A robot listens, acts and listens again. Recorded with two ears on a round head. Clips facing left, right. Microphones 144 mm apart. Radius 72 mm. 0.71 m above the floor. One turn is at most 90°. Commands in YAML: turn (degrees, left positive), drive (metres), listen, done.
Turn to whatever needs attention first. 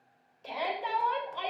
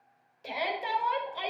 turn: -30
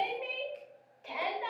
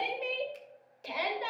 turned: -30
turn: -90
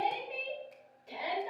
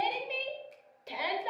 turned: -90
turn: -80
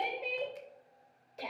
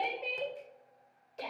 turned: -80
done: "Found it: a shout, straight ahead."